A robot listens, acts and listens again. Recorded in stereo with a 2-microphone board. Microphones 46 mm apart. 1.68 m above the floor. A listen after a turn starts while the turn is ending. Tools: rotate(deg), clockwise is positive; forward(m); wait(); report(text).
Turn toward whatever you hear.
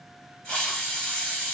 rotate(-25)
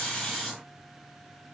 wait()
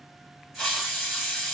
report("Facing the hiss.")